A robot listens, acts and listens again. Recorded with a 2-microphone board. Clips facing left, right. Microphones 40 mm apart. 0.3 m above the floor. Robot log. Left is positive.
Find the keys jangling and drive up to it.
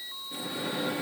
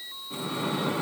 cmd idle
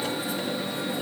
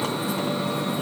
cmd idle
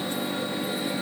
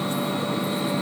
end: I can't make out keys jangling to turn to.